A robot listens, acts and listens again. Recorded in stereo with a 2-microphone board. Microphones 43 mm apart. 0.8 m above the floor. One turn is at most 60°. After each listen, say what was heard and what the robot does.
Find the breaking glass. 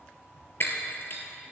The breaking glass: about 60° left or 120° left. Turn 60° left.
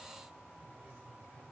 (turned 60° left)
Keep listening.
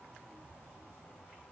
I heard breaking glass, but can't make it out now. It was about straight ahead or 60° left.